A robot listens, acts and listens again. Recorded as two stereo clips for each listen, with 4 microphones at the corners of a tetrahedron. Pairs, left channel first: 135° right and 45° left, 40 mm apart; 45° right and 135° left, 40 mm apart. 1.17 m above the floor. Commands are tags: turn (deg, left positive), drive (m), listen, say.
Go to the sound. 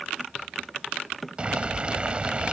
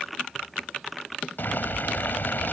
<turn deg="-15"/>
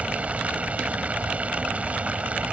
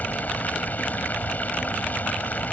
<drive m="1.0"/>
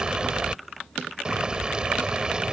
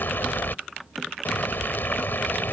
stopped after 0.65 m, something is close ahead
<turn deg="-20"/>
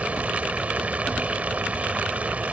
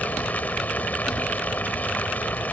<say>Blocked. The boiling is further on, straight ahead.</say>